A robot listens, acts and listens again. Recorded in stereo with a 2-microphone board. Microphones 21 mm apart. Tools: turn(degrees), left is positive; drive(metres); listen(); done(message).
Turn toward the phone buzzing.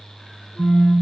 turn(degrees=-60)
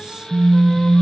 turn(degrees=-60)
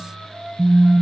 done("Found it: a phone buzzing, straight ahead.")